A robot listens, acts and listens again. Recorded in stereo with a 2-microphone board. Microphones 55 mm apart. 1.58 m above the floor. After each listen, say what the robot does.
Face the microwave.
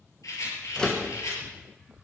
Turn 30° left.
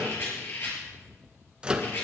Turn 20° right.
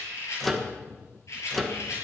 Facing the microwave.